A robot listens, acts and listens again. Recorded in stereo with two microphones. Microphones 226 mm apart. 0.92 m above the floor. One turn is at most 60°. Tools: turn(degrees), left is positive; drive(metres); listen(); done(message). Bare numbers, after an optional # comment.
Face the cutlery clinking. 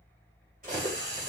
# The cutlery clinking: about 40° right or 140° right.
turn(-40)
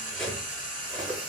done("Facing the cutlery clinking, 2 to 4 m away.")